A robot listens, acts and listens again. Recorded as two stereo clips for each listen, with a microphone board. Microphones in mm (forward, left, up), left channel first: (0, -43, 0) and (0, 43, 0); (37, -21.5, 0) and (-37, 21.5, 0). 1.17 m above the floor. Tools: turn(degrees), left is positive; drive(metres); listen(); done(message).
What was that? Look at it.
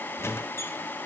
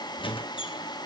turn(degrees=-30)
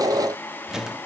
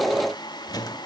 done("Found it: a squeak, straight ahead, 1 to 2 m away.")